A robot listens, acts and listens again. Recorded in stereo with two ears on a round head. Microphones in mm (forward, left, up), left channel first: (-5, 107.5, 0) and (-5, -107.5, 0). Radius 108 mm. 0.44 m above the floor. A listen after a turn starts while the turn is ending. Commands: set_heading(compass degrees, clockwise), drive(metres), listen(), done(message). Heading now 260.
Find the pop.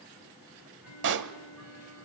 set_heading(310)
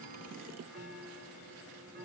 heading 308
listen()
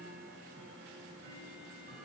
done("I heard a pop, but can't make it out now. It was about straight ahead or 80° right.")